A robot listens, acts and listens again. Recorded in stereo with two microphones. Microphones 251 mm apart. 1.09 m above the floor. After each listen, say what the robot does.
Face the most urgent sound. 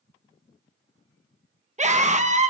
Turn 30° right.
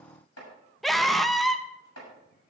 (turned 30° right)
Facing the scream, 1 to 2 m away.